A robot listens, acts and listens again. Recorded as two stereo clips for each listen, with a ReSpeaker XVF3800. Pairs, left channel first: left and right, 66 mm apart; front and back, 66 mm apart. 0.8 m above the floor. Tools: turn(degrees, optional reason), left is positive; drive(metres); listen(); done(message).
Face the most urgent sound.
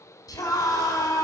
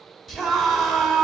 turn(degrees=90, reason="The scream: 90° left.")
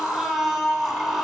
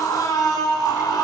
done("Facing the scream, 2 to 4 m away.")